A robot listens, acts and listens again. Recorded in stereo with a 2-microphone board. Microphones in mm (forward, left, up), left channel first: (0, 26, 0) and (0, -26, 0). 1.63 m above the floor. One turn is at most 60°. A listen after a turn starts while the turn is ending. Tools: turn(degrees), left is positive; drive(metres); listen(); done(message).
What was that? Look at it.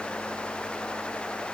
listen()
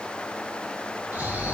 turn(degrees=-30)
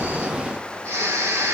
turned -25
turn(degrees=-60)
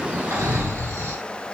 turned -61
turn(degrees=-60)
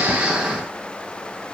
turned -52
turn(degrees=-10)
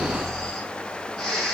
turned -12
done("Found it: snoring, straight ahead.")